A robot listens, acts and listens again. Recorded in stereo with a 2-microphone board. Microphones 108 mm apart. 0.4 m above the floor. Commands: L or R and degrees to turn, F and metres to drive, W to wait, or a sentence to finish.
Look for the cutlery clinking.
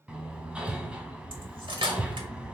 R55
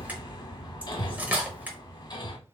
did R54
R20
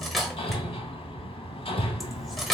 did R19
Facing the cutlery clinking.